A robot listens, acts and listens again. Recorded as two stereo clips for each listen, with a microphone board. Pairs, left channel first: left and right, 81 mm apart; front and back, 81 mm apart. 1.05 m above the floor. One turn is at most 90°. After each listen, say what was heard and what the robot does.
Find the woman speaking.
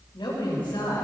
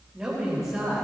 The woman speaking: 110° left. Turn 90° left.
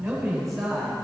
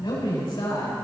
Found it: a woman speaking, straight ahead, 2 to 4 m away.